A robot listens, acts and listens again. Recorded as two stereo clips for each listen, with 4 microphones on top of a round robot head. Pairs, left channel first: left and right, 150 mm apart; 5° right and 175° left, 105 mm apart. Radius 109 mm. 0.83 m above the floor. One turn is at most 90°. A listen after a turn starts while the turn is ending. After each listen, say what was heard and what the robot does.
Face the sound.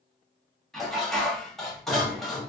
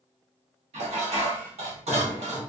The dishes clattering: 175° left. Turn 90° left.
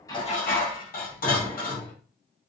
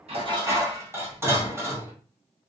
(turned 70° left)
The dishes clattering is now 105° left. Turn 90° left.
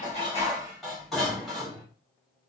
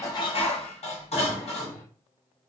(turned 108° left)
Facing the dishes clattering, 1 to 2 m away.